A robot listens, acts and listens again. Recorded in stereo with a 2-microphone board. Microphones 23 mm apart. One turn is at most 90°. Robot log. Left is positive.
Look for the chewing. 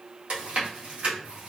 note: The chewing: about 65° right or 115° right.
cmd yaw -65
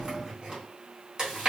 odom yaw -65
note: So it is at 30° right.
cmd yaw -30
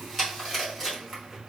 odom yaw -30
end: Facing the chewing.